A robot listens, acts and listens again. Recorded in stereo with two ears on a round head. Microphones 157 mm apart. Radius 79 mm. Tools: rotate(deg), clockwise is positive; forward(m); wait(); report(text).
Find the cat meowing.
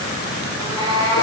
rotate(30)
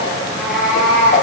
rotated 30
report("Facing the cat meowing, over 4 m away.")